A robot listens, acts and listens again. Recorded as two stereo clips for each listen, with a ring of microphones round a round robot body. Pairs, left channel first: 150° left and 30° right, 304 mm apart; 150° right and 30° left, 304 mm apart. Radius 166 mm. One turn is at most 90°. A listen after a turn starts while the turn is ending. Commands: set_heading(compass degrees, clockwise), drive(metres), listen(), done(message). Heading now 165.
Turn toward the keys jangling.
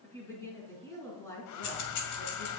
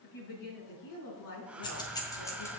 set_heading(75)
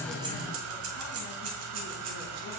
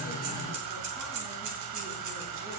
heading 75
done("Found it: keys jangling, straight ahead.")